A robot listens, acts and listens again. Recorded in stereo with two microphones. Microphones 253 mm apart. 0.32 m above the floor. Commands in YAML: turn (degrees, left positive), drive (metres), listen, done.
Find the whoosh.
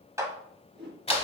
turn: -45
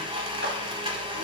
listen: true
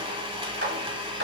listen: true
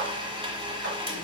done: "I heard a whoosh, but can't make it out now. It was about straight ahead or 90° right."